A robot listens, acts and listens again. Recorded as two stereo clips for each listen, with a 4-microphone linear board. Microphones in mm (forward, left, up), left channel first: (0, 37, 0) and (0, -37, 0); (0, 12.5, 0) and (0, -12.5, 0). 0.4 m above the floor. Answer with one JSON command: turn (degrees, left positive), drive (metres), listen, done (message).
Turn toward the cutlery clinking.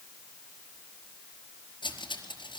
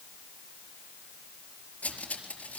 {"turn": 90}
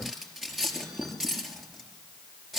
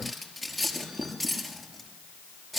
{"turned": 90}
{"done": "Facing the cutlery clinking, over 4 m away."}